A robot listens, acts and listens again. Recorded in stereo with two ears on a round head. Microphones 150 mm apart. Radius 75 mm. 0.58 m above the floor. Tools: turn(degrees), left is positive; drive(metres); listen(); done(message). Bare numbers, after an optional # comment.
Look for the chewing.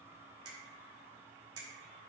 listen()
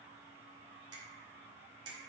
listen()
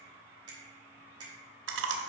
turn(-90)
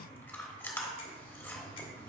# So it is at 15° left.
turn(15)
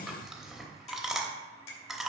done("Facing the chewing.")